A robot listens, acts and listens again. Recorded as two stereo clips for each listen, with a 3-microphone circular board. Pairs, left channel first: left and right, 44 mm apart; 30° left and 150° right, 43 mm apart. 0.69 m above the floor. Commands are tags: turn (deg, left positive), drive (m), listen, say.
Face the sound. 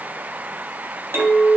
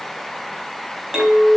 <turn deg="-70"/>
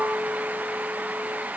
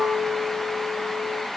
<say>Facing the clink.</say>